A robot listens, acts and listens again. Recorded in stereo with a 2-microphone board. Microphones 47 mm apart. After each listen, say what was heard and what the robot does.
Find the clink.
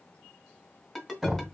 Keep listening.
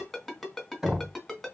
Keep listening.
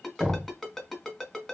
I can't make out a clink, only knocking and a ringtone.